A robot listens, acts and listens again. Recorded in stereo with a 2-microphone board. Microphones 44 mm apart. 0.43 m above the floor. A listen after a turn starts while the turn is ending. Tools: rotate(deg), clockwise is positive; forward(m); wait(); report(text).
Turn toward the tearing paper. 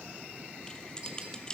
wait()
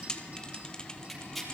rotate(-30)
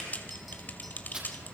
rotate(25)
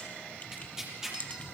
rotate(10)
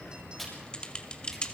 report("Found it: tearing paper, straight ahead, over 4 m away.")